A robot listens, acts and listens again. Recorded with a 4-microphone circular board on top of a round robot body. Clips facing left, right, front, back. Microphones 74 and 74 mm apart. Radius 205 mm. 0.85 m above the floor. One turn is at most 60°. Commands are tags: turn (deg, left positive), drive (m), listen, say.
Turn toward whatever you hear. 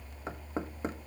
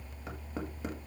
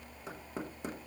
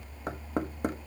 <turn deg="60"/>
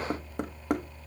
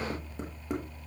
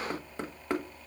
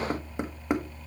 <turn deg="60"/>
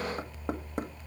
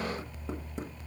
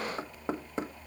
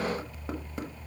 <turn deg="60"/>
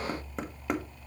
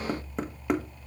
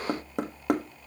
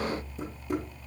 <say>Facing the knocking, 1 to 2 m away.</say>